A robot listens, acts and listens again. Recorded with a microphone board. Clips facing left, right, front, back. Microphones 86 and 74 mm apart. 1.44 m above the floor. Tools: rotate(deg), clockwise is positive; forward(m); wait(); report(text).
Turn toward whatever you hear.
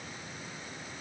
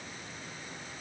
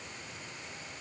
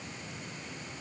wait()
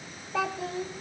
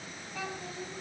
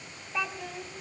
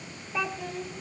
rotate(-85)
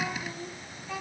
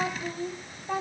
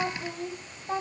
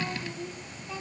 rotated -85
rotate(40)
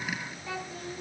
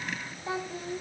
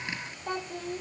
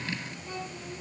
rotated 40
rotate(30)
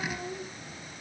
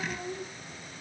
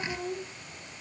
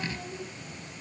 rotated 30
report("Facing the child speaking, 2 to 4 m away.")